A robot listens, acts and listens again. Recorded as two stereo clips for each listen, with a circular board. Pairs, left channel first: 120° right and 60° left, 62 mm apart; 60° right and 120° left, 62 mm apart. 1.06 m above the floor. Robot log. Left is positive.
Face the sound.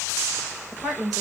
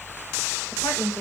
note: The woman speaking: 30° right.
cmd yaw -30
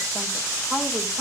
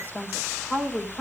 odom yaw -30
end: Found it: a woman speaking, straight ahead, over 4 m away.